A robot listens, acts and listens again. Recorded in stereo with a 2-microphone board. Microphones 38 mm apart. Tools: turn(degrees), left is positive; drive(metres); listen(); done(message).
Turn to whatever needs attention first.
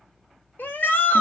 turn(degrees=65)
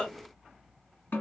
turn(degrees=35)
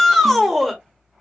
done("Found it: a shout, straight ahead, 1 to 2 m away.")